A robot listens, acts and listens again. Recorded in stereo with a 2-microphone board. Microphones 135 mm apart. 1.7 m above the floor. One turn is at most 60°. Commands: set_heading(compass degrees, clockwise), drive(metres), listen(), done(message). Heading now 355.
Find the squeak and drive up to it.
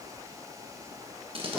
listen()
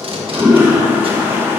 listen()
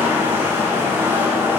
done("I can't make out a squeak, only tape being pulled and a toilet flushing.")